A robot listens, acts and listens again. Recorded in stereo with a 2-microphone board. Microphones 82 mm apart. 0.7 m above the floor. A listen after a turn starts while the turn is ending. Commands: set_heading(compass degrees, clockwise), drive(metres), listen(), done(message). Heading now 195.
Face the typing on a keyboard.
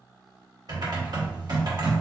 set_heading(250)
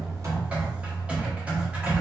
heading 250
set_heading(265)
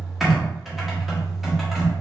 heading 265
done("Found it: typing on a keyboard, straight ahead.")